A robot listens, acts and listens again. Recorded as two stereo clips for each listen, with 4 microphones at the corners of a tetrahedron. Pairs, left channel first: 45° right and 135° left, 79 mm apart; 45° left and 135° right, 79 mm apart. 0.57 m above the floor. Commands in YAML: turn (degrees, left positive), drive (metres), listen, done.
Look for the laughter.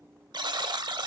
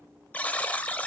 listen: true
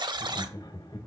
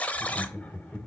turn: -30
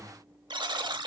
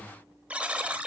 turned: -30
listen: true
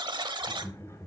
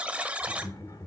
done: "Facing the laughter."